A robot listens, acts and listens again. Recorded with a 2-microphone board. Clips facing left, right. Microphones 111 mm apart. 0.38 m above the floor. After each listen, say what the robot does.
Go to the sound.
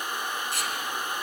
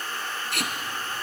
Turn 75° right.
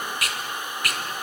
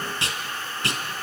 Turn 30° right.
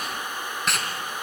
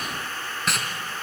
Drive 1.0 m forward.
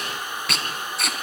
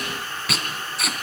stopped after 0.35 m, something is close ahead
Blocked. The tape being pulled is further on, straight ahead.